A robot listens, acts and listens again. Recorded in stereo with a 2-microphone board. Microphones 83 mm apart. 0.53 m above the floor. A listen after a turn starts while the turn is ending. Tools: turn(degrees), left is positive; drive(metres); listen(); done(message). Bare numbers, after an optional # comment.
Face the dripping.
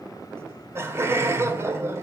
listen()
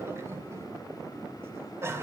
listen()
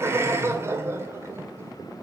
done("I can't make out dripping to turn to.")